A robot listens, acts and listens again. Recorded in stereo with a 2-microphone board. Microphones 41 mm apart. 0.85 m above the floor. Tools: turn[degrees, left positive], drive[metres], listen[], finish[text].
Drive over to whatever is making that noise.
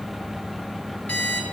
Thought: The alarm clock: about 35° left or 145° left.
Action: turn[35]
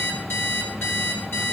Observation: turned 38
Thought: So it is at 105° left.
Action: turn[105]
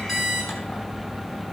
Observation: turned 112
Action: drive[1.0]
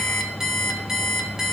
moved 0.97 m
Thought: The alarm clock is now 10° right.
Action: turn[-10]
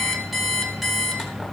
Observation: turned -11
Action: drive[1.0]
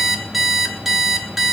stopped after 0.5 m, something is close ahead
Action: finish[Arrived at the alarm clock, straight ahead.]